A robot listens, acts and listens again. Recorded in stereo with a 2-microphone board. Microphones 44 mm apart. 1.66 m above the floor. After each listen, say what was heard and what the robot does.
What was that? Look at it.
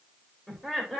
Turn 30° left.
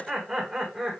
Turn 30° right.
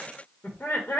So it is at 65° left. Turn 65° left.
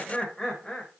The laughter is now 30° left. Turn 30° left.
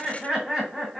Facing the laughter, 1 to 2 m away.